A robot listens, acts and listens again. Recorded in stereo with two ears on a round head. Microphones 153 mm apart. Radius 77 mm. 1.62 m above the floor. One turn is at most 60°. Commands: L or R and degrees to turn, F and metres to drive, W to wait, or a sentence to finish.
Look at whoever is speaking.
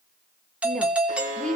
L30
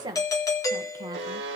R25
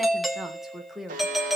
Facing the woman speaking, 1 to 2 m away.